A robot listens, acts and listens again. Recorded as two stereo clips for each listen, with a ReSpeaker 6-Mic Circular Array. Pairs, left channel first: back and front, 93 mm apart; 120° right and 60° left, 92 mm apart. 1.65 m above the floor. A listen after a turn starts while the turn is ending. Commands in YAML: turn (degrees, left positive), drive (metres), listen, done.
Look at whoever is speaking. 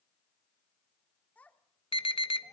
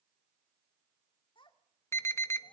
turn: -110
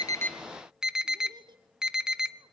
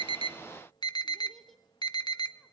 turn: -35
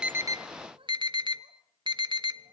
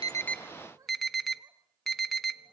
turn: 10
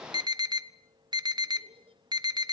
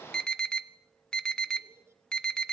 done: "Facing the child speaking."